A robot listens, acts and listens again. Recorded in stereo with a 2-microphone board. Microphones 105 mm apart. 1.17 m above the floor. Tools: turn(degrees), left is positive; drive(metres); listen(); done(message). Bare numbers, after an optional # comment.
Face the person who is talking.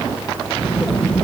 turn(30)
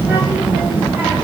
# So it is at 20° right.
turn(-20)
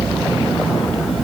done("Facing the child speaking, 2 to 4 m away.")